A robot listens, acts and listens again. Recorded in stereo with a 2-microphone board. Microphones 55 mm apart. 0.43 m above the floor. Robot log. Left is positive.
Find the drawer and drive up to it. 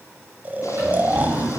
note: The drawer: about 35° right or 145° right.
cmd yaw -35
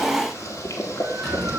cmd idle
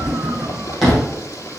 cmd fwd 1.0
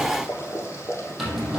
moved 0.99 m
cmd fwd 1.0
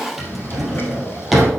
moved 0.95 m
cmd fwd 1.0
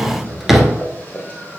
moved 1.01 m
cmd fwd 1.0
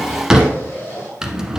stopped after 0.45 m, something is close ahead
note: The drawer is now 10° right.
cmd yaw -10
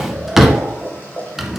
end: Arrived at the drawer, straight ahead.